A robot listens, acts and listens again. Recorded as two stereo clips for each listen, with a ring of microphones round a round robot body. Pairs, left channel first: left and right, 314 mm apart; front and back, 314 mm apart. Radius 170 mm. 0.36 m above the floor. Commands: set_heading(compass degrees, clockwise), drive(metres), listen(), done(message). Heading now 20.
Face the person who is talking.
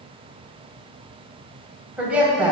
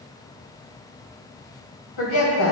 done("Facing the woman speaking.")